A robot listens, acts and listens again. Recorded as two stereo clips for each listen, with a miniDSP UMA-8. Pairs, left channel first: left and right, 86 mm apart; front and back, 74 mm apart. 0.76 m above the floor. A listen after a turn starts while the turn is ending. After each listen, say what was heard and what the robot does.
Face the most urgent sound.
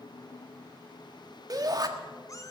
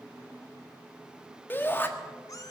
The shout: 60° right. Turn 60° right.
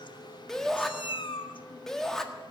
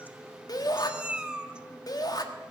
Found it: a shout, straight ahead, 1 to 2 m away.